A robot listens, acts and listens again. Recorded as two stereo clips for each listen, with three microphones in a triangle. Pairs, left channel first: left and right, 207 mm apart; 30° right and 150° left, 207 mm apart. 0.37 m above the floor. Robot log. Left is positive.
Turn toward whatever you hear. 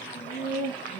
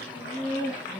note: The laughter: 45° left.
cmd yaw +45
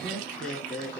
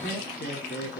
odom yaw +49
end: Found it: laughter, straight ahead, over 4 m away.